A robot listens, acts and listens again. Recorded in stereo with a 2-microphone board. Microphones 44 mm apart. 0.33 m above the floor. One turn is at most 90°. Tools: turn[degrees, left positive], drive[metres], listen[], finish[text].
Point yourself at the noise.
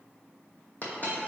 Thought: The dropped coin: about 40° left or 140° left.
Action: turn[40]
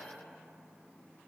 Action: listen[]
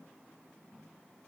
Action: finish[I heard a dropped coin, but can't make it out now. It was about straight ahead or 100° left.]